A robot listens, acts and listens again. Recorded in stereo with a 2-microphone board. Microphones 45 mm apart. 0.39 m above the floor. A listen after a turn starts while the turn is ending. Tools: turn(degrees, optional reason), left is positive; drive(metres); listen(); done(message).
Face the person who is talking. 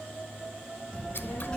turn(degrees=20, reason="The child speaking: about 20° left or 160° left.")
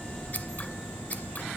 done("Facing the child speaking, 2 to 4 m away.")